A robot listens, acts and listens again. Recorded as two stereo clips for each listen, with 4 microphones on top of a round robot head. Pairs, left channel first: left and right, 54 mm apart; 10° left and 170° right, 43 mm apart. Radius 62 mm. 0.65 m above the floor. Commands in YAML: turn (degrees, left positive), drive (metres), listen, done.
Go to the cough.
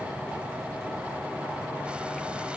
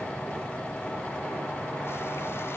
listen: true
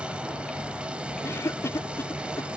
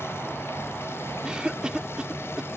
turn: 120
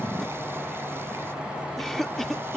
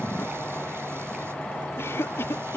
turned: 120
drive: 1.0
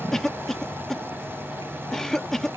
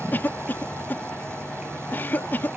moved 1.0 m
turn: 10
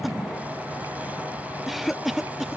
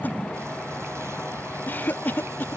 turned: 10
drive: 1.0
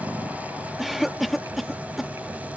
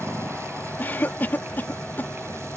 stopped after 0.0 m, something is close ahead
done: "Arrived at the cough, straight ahead."